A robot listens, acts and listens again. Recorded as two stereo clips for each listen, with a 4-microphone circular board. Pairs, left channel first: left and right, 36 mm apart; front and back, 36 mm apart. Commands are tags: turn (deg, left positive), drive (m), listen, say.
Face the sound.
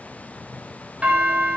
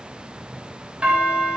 <turn deg="-130"/>
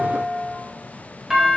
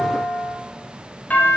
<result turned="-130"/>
<turn deg="-15"/>
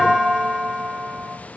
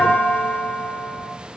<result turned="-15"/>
<say>Facing the doorbell, 2 to 4 m away.</say>